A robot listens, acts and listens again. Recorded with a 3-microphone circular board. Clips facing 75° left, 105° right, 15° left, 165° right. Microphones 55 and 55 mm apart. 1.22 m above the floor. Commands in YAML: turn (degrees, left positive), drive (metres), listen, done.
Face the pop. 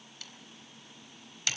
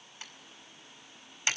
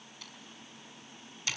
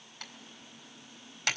listen: true
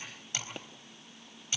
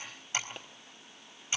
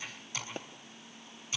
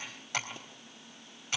turn: -15
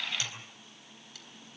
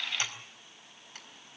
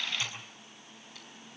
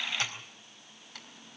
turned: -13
done: "I heard a pop from this way, but can't make it out now."